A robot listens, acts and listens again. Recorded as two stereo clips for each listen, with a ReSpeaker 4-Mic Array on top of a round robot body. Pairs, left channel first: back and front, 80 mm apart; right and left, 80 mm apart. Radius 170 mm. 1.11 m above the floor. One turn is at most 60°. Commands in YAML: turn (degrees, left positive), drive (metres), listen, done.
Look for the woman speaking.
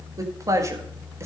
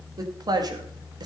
turn: 50
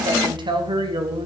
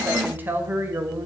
turn: 25
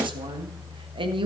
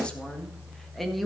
done: "Facing the woman speaking."